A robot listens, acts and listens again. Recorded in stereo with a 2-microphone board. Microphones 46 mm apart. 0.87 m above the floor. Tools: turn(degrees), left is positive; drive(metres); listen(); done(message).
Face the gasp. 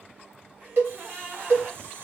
turn(degrees=-30)
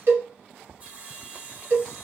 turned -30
listen()
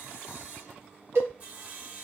done("I heard a gasp, but can't make it out now. It was about straight ahead or 120° right.")